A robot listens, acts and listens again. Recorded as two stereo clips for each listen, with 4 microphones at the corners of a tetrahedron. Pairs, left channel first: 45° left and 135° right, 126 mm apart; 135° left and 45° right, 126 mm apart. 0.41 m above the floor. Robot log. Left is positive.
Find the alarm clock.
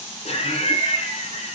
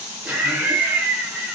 cmd idle
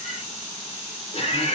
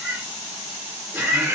cmd idle
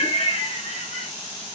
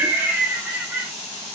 end: I can't make out an alarm clock, only laughter.